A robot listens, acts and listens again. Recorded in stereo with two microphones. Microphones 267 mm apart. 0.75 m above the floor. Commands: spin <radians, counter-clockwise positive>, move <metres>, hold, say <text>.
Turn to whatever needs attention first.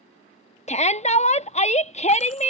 spin 0.44
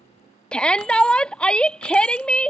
say Found it: a shout, straight ahead.